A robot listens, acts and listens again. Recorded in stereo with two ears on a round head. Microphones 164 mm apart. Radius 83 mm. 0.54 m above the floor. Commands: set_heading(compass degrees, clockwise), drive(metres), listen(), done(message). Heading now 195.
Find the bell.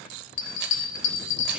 set_heading(105)
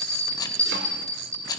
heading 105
done("Found it: a bell, straight ahead, 2 to 4 m away.")